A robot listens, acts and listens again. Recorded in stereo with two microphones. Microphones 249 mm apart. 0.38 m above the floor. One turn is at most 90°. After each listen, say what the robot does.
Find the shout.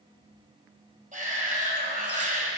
Turn 30° right.
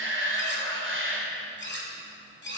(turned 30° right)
Turn 90° right.
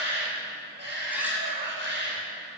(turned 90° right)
Turn 60° right.
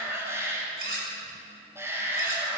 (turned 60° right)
Turn 10° right.
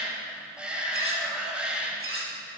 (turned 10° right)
Facing the shout, 2 to 4 m away.